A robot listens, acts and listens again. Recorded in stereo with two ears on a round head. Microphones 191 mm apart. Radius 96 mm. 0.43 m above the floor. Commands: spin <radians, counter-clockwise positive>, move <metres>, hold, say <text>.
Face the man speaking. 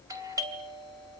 hold
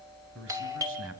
spin -1.22
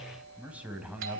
say Facing the man speaking, 2 to 4 m away.